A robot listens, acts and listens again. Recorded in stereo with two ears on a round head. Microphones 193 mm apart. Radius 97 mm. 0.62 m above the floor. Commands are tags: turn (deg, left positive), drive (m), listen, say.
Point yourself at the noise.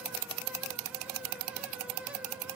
<listen/>
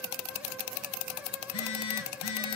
<turn deg="90"/>
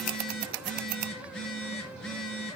<say>Found it: a phone buzzing, straight ahead.</say>